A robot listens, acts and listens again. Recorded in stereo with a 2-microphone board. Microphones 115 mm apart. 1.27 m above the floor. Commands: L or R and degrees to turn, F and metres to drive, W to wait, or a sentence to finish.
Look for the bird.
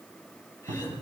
W
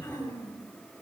W
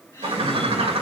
R55
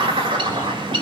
R55
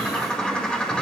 L10
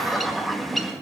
Found it: a bird, straight ahead, 1 to 2 m away.